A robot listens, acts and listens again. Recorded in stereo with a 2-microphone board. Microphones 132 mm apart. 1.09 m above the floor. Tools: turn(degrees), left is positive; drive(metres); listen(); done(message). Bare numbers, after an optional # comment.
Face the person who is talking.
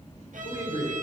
turn(90)
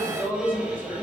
# So it is at 15° right.
turn(-15)
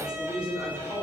# The man speaking is now 15° right.
turn(-15)
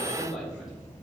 done("Found it: a man speaking, straight ahead.")